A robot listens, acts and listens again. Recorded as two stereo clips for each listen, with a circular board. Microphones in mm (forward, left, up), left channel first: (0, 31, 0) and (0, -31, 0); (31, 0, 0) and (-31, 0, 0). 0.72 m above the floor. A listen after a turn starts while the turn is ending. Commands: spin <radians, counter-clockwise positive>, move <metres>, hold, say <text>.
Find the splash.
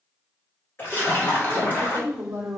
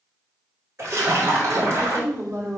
spin 2.53
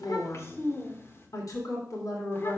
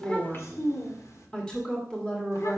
say Facing where the splash came from. I can't hear it now.